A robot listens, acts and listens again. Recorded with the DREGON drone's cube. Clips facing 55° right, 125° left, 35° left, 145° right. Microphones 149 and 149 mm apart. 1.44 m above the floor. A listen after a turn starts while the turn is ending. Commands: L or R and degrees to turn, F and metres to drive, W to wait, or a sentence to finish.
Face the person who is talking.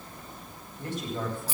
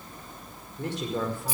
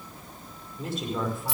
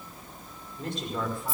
L120
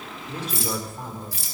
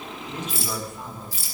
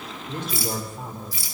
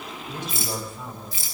Facing the woman speaking.